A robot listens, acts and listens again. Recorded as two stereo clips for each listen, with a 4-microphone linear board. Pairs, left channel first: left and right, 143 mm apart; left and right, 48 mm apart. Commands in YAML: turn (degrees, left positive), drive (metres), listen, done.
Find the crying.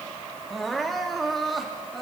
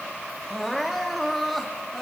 turn: 30
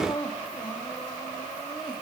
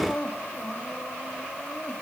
turn: 150
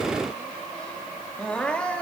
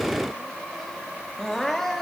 turn: 10
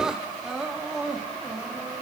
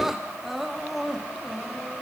done: "Facing the crying."